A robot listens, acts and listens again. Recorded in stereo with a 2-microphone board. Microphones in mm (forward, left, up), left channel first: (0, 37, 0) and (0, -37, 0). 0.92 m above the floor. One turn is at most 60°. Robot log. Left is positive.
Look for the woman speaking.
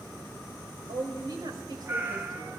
note: The woman speaking: about 65° right or 115° right.
cmd yaw -60
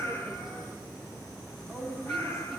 end: Facing the woman speaking, over 4 m away.